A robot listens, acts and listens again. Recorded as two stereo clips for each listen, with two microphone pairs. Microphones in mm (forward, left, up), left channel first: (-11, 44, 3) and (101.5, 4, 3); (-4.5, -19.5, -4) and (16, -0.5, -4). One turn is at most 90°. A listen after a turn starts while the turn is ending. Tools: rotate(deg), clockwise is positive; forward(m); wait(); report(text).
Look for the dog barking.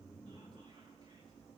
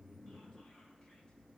wait()
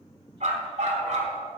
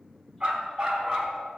rotate(30)
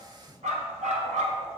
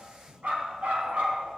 rotate(10)
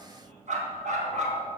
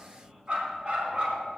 rotate(15)
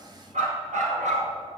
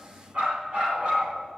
rotate(10)
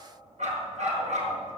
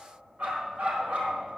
report("Found it: a dog barking, straight ahead.")